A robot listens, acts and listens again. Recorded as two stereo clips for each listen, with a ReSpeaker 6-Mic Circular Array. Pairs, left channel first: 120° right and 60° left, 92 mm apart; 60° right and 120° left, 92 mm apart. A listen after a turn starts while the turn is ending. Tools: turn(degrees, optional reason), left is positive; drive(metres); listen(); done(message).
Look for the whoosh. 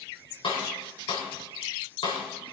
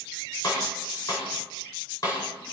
listen()
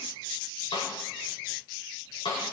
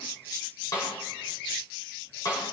listen()
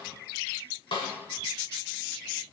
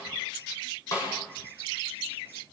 done("I can't make out a whoosh, only a snare drum.")